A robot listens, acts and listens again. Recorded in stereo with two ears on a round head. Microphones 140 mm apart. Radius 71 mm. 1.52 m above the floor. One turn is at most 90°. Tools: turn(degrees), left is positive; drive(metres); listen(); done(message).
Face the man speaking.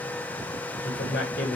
turn(degrees=60)
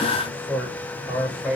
done("Found it: a man speaking, straight ahead, over 4 m away.")